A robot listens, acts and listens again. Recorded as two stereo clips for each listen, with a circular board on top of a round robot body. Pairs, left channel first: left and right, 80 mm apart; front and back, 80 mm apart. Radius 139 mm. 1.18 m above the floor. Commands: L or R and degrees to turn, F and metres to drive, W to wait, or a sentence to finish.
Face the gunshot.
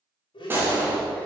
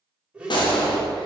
R25
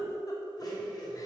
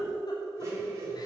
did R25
Facing where the gunshot came from. I can't hear it now.